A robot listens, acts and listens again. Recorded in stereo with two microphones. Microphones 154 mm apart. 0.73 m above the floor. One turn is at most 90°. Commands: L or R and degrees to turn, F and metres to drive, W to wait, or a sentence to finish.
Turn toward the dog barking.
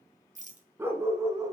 R20
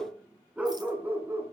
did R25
R15
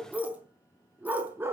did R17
R15
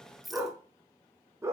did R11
R20
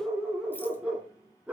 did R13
R30
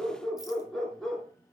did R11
L30
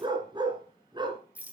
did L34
R30
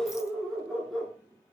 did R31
Found it: a dog barking, straight ahead.